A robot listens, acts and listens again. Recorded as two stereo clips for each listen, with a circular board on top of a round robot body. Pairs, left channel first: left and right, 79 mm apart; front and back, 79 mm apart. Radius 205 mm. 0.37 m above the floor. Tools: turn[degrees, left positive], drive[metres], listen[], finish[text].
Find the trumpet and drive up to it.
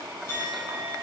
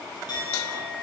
Action: listen[]
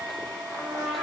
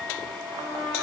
Thought: The trumpet: 175° left.
Action: turn[175]
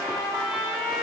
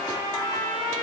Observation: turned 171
Action: drive[1.0]
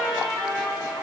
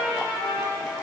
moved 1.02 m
Action: drive[1.0]
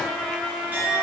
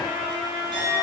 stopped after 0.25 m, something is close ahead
Action: finish[Arrived at the trumpet, straight ahead.]